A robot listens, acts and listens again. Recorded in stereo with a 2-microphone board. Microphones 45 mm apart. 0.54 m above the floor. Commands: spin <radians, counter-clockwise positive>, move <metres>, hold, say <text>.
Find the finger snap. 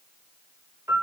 hold
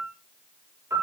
hold
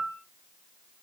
say I can't make out a finger snap to turn to.